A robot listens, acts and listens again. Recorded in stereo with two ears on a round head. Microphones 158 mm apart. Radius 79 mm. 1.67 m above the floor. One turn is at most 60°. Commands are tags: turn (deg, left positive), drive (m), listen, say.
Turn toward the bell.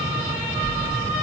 <turn deg="30"/>
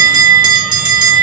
<turn deg="-30"/>
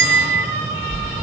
<say>Facing the bell.</say>